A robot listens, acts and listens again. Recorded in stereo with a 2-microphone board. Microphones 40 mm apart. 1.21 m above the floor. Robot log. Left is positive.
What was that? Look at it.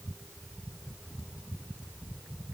cmd idle
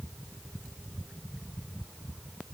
cmd idle
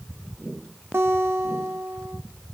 cmd yaw -90
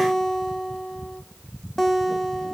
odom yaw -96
end: Facing the guitar, under 1 m away.